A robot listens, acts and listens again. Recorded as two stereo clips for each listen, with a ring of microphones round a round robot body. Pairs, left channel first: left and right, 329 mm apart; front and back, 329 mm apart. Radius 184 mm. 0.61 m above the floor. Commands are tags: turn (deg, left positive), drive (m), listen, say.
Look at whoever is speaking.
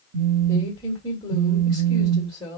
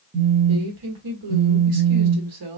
<turn deg="165"/>
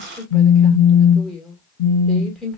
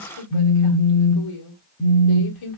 <say>Facing the woman speaking, 1 to 2 m away.</say>